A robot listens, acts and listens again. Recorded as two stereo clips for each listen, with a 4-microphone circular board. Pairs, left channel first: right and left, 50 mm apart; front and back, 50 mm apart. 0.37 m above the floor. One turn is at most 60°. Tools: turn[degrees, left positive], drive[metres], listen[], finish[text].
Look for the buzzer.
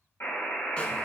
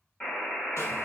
Thought: The buzzer: 60° right.
Action: turn[-60]
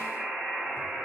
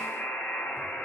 Action: finish[Facing the buzzer.]